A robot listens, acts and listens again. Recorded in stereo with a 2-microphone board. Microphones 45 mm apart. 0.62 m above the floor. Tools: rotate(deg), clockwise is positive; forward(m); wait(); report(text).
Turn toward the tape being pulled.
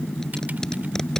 rotate(-30)
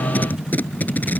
rotate(-135)
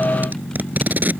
rotate(45)
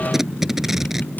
rotate(10)
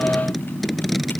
report("Found it: tape being pulled, straight ahead.")